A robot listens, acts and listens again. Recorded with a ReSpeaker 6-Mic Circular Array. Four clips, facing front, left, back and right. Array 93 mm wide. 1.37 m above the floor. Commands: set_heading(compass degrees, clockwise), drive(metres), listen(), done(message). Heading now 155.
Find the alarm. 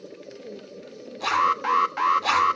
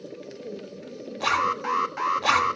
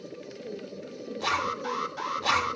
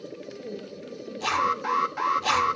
done("Found it: an alarm, straight ahead.")